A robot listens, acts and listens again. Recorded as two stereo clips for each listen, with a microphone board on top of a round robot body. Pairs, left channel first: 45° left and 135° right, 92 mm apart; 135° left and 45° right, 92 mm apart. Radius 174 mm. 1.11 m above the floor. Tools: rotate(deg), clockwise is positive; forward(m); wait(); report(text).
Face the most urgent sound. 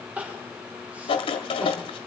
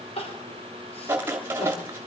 rotate(-150)
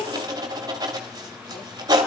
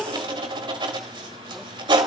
rotate(-45)
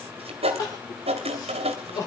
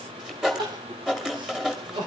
report("Facing the crying.")